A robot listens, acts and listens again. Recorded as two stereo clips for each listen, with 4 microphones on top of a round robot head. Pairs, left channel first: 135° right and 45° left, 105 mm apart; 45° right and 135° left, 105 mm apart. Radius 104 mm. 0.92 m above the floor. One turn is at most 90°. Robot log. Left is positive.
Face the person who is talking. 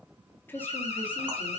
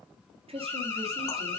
note: The woman speaking: 155° left.
cmd yaw +90
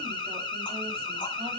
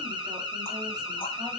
note: Nothing new. It was at 65° left.
cmd yaw +65
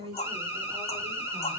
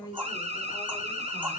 note: The woman speaking is now 10° left.
cmd yaw +10
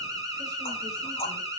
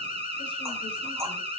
cmd idle
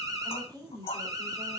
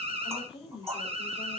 end: Facing the woman speaking, over 4 m away.